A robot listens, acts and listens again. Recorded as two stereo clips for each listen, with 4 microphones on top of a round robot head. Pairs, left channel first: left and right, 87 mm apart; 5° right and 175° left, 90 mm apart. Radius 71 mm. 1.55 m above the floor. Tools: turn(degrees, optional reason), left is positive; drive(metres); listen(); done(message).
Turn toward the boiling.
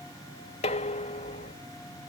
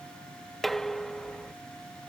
listen()
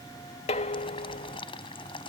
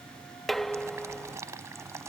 turn(degrees=115, reason="The boiling: 115° left.")
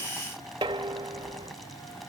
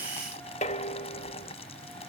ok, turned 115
done("Facing the boiling.")